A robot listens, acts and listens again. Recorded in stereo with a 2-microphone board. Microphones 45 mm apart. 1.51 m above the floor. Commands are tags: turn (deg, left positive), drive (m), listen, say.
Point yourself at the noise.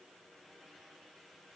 <listen/>
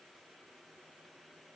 <listen/>
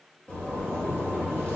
<turn deg="40"/>
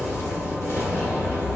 <turn deg="100"/>
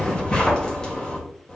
<turn deg="15"/>
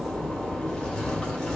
<say>Found it: a zipper, straight ahead, 1 to 2 m away.</say>